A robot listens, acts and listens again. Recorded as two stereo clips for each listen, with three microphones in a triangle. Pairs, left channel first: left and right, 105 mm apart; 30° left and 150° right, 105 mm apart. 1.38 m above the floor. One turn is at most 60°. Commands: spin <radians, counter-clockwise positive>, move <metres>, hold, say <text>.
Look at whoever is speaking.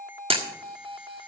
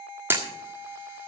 hold
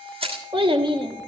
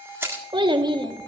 spin -1.05
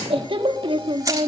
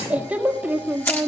spin -1.05
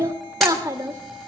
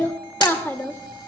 spin -0.61
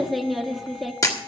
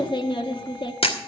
say Found it: a child speaking, straight ahead.